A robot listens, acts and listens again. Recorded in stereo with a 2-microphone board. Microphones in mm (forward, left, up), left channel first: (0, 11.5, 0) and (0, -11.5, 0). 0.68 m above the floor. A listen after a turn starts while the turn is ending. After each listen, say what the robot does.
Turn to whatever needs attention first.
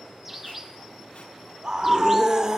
Turn 30° right.
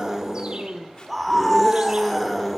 Found it: a scream, straight ahead.